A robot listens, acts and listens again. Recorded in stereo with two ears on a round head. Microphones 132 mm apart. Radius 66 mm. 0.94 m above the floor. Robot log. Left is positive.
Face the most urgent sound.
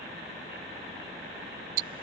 cmd idle
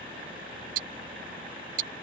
cmd idle
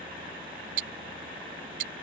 end: I can't make out anything urgent, only ticking.